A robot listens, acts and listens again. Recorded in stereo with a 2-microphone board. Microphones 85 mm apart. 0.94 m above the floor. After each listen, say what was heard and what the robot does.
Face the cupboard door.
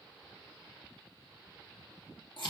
Keep listening.
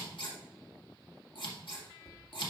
The cupboard door: about 45° left or 135° left. Turn 45° left.
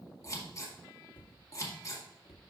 So it is at 90° left. Turn 90° left.
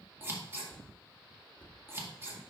The cupboard door is now 20° left. Turn 20° left.
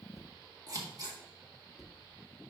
Facing the cupboard door.